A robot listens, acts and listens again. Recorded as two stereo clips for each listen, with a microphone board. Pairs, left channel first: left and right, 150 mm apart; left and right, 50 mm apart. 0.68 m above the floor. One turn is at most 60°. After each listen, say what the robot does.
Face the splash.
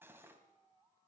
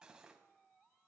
Keep listening.
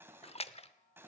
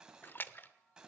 Turn 40° left.
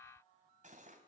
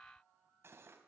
Keep listening.
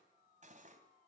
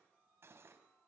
I heard a splash, but can't make it out now. It was about straight ahead or 100° left.